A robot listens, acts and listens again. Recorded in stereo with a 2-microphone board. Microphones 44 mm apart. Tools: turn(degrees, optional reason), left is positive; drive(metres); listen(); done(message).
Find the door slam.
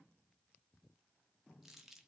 listen()
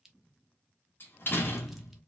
turn(degrees=55, reason="The door slam: about 55° left or 125° left.")
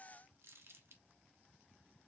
listen()
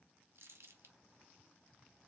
done("I heard a door slam, but can't make it out now. It was about straight ahead or 70° left.")